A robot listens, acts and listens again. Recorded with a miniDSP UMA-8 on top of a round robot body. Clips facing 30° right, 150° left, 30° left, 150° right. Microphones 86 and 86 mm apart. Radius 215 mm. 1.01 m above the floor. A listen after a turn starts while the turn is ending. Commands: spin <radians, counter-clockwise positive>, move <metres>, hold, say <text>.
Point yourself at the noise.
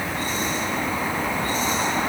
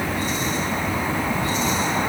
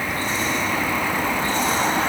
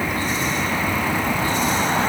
hold
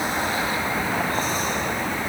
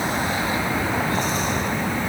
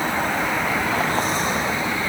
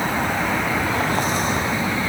hold
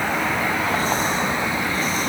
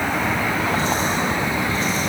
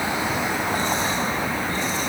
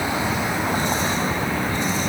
say I can't make out anything to turn to.